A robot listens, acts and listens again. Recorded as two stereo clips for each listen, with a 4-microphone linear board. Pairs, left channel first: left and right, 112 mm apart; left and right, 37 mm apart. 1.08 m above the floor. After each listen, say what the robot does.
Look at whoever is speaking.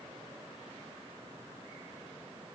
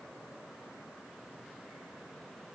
Keep listening.
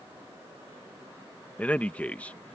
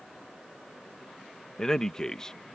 Turn 30° left.
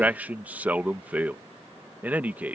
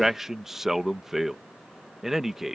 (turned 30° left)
Turn 15° right.
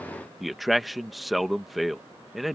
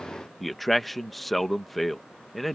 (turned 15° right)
Facing the man speaking.